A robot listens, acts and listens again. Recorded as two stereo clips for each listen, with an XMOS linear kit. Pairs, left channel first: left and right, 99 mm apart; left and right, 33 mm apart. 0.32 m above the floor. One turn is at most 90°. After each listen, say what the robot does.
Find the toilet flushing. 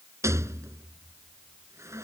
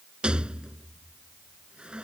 Keep listening.
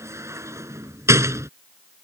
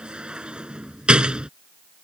Keep listening.
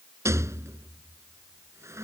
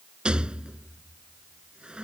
I can't make out a toilet flushing to turn to.